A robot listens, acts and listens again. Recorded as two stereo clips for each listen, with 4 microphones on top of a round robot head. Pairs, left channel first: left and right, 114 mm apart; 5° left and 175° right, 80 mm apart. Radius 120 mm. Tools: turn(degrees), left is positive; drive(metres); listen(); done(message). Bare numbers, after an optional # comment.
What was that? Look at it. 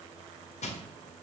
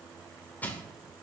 # The crushing: 75° left.
turn(75)
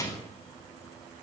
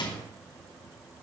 # The crushing is now 30° left.
turn(30)
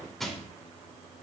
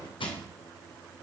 done("Found it: crushing, straight ahead.")